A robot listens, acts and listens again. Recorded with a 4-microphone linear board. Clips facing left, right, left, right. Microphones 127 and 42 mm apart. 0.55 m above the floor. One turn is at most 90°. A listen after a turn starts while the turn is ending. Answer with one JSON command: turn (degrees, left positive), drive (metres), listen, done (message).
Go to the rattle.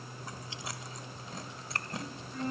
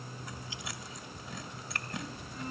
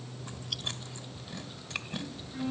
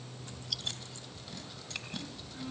{"listen": true}
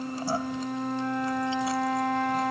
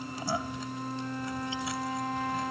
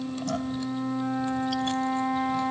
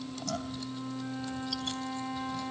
{"listen": true}
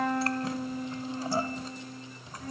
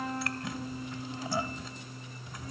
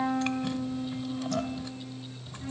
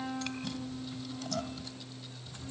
{"done": "I can't make out a rattle to turn to."}